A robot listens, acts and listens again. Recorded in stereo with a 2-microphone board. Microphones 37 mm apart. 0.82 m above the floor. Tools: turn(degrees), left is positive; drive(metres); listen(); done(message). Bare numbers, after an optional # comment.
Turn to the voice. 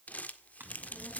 # The child speaking: about 55° left or 125° left.
turn(55)
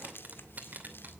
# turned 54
done("Facing the child speaking.")